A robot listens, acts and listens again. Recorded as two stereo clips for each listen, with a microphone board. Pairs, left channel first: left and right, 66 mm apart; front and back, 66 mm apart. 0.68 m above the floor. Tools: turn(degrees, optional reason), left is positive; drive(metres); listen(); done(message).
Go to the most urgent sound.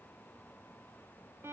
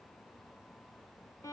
listen()
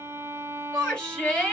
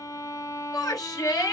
turn(degrees=15, reason="The shout: 15° left.")
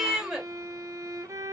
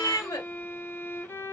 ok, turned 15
drive(metres=1.0)
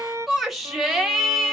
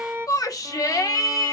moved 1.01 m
drive(metres=1.0)
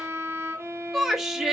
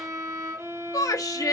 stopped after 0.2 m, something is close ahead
done("Arrived at the shout, straight ahead.")